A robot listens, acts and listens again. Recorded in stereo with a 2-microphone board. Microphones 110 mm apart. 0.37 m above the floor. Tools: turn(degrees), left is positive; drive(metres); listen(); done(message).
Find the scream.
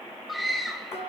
turn(degrees=30)
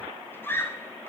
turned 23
turn(degrees=155)
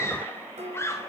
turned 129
turn(degrees=30)
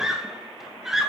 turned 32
done("Facing the scream, 1 to 2 m away.")